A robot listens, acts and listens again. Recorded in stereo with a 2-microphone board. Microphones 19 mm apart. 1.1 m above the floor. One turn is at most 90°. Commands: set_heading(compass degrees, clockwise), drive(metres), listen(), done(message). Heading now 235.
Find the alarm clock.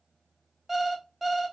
set_heading(265)
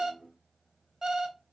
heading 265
set_heading(355)
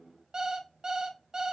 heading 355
set_heading(40)
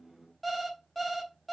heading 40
done("Found it: an alarm clock, straight ahead.")